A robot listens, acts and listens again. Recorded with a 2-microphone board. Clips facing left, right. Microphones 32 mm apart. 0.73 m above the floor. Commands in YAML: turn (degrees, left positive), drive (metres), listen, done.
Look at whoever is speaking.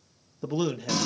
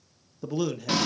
turn: 30
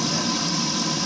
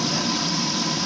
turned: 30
listen: true
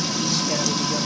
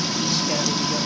listen: true
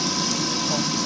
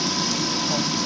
done: "I heard a man speaking, but can't make it out now. It was about 15° right or 135° left."